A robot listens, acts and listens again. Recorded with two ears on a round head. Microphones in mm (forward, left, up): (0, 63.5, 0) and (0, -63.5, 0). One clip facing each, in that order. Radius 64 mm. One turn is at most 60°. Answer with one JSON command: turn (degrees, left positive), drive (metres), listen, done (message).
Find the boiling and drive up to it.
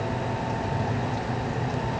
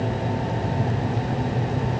{"listen": true}
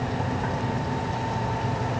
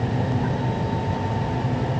{"listen": true}
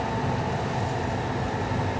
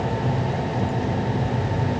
{"done": "I can't make out boiling to turn to."}